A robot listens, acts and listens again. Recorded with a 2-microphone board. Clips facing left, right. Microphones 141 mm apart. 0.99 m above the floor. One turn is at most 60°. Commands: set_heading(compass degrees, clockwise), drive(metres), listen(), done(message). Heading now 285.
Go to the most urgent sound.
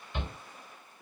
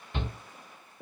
set_heading(345)
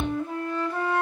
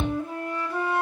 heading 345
set_heading(40)
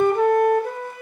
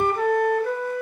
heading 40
listen()
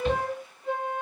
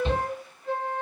set_heading(65)
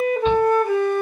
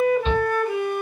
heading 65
drive(1.0)
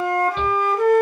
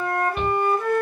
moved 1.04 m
drive(1.0)
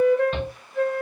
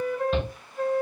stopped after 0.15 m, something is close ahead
done("I am next to the shout.")